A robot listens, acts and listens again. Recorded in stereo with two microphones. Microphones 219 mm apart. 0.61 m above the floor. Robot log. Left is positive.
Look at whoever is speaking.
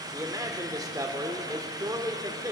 note: The man speaking: about 15° right or 165° right.
cmd yaw -15
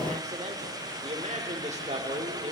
note: So it is at 150° right.
cmd yaw -150
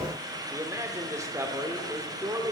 note: The man speaking is now 15° right.
cmd yaw -15
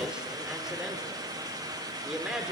end: Facing the man speaking.